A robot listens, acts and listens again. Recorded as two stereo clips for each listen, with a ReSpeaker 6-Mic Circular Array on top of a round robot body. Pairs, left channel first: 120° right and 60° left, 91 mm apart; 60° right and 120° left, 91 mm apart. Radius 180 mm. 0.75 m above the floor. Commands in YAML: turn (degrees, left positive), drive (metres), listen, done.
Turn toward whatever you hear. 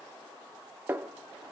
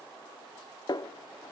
turn: -10
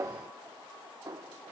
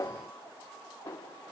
done: "Found it: a snare drum, straight ahead, under 1 m away."